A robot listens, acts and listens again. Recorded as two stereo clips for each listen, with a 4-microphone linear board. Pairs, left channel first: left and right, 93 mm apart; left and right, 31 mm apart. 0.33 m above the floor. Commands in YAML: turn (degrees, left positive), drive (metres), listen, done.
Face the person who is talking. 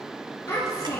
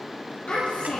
turn: 40
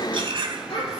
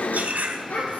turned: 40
turn: 100
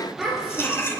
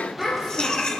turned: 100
done: "Found it: a child speaking, straight ahead, over 4 m away."